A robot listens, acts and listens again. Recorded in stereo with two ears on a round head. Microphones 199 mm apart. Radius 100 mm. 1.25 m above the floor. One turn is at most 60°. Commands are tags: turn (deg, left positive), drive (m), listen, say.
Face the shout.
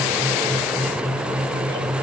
<listen/>
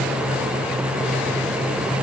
<listen/>
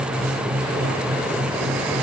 <say>I can't make out a shout.</say>